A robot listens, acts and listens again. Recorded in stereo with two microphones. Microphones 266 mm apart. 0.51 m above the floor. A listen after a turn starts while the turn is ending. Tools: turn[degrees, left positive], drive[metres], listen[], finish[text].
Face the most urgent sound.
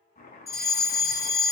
Action: turn[-30]
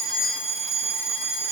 Thought: So it is at 15° left.
Action: turn[15]
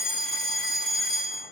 Action: finish[Found it: a fire alarm, straight ahead, 2 to 4 m away.]